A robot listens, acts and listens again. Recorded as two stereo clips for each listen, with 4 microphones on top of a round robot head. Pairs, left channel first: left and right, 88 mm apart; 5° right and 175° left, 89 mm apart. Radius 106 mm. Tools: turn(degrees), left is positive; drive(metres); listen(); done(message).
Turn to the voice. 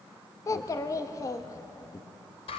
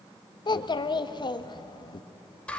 turn(degrees=35)
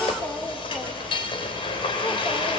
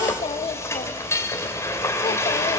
turn(degrees=15)
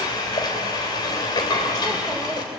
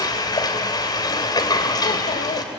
listen()
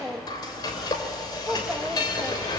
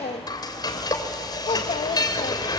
done("Facing the child speaking.")